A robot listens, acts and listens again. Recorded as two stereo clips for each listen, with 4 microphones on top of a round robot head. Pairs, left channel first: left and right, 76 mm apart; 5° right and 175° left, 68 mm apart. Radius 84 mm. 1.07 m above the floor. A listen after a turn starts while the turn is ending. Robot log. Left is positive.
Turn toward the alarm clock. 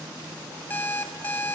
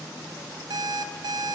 note: The alarm clock: 155° left.
cmd yaw +155
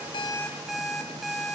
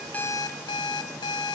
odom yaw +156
end: Found it: an alarm clock, straight ahead, 1 to 2 m away.